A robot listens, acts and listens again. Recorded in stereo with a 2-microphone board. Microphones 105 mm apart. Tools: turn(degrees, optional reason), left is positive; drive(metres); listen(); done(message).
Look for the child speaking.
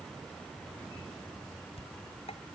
listen()
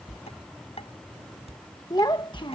turn(degrees=50, reason="The child speaking: about 50° left or 130° left.")
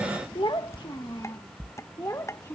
turn(degrees=30, reason="So it is at 30° left.")
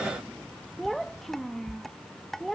done("Facing the child speaking.")